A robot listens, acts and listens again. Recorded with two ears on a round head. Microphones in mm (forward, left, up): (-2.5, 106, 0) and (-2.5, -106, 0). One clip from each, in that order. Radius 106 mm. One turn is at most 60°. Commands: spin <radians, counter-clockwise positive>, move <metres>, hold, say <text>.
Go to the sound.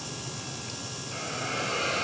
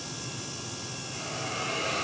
spin 1.05
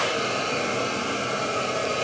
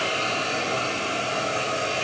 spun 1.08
move 1.0
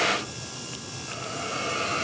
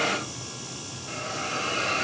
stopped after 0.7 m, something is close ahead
say Something is in my way. I am facing the hiss but have not reached it.